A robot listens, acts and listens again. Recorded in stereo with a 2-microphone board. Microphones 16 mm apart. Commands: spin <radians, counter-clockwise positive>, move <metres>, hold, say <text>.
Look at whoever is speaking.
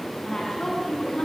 spin 0.79
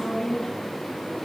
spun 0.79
spin 1.66
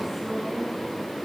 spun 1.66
spin -0.26
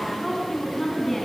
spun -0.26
say Facing the woman speaking.